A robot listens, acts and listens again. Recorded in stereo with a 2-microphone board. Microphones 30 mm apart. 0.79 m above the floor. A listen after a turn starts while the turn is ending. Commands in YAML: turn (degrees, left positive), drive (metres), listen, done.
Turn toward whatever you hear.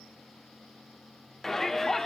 turn: 30
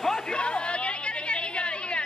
turn: 140
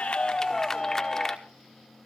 turn: 15
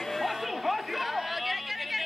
done: "Facing the shout, 1 to 2 m away."